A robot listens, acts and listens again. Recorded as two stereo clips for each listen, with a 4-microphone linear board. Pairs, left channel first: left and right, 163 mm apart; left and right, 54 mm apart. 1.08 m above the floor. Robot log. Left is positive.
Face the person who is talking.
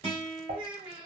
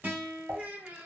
note: The child speaking: about 30° right or 150° right.
cmd yaw -30
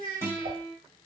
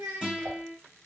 note: So it is at 120° right.
cmd yaw -120
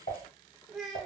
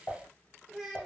end: Found it: a child speaking, straight ahead.